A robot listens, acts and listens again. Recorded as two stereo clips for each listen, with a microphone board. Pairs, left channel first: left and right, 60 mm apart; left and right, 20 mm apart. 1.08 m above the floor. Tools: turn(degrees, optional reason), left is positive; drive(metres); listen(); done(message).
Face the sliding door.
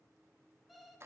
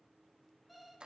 listen()
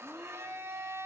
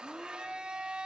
listen()
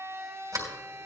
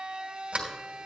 turn(degrees=-90)
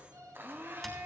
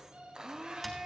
done("Found it: a sliding door, straight ahead, 2 to 4 m away.")